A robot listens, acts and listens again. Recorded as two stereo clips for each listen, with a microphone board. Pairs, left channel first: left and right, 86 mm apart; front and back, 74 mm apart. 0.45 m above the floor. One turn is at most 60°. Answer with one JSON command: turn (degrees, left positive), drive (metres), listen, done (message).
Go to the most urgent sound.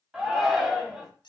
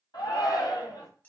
{"turn": -10}
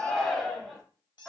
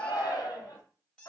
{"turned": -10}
{"drive": 1.0}
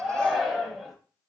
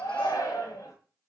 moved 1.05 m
{"drive": 1.0}
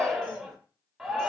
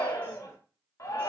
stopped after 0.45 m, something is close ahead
{"turn": -10}
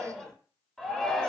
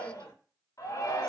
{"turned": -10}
{"done": "I am next to the shout."}